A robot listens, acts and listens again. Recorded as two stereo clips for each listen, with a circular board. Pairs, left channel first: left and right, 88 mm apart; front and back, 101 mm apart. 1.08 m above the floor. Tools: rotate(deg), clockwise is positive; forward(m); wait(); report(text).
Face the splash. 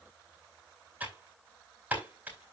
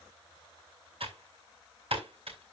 wait()
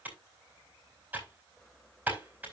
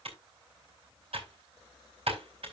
wait()
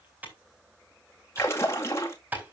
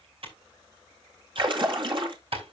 rotate(-145)
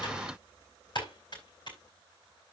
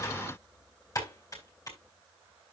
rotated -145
report("I heard a splash from this way, but can't make it out now.")